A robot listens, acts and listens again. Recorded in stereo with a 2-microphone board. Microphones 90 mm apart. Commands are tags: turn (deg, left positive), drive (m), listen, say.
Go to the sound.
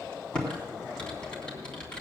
<turn deg="30"/>
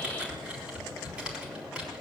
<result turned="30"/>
<turn deg="-15"/>
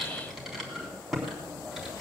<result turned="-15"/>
<drive m="1.0"/>
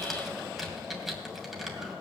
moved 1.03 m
<drive m="1.0"/>
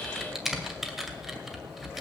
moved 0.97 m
<drive m="1.0"/>
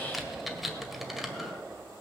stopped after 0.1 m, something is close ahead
<say>Arrived at the typing on a keyboard, straight ahead.</say>